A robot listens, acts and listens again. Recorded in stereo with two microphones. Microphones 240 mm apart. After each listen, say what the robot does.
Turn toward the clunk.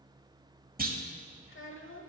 Turn 35° right.
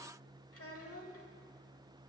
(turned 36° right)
Keep listening.
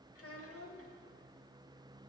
I heard a clunk, but can't make it out now. It was about straight ahead or 105° right.